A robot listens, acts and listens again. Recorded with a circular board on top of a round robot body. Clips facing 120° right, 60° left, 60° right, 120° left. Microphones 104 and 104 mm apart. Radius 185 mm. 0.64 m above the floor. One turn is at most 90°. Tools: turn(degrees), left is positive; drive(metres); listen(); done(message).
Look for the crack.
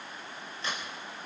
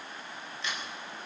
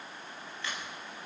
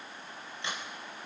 turn(degrees=-90)
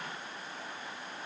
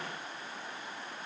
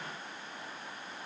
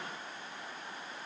turn(degrees=-80)
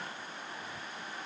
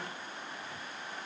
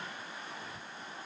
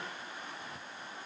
done("I heard a crack from this way, but can't make it out now.")